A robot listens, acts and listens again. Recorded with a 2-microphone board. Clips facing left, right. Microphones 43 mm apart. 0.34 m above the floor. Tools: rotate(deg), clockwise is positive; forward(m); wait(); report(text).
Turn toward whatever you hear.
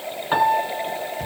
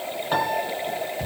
rotate(-30)
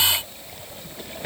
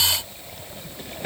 wait()
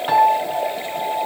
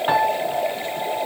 rotate(15)
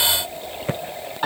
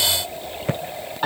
report("Found it: a piano, straight ahead, over 4 m away.")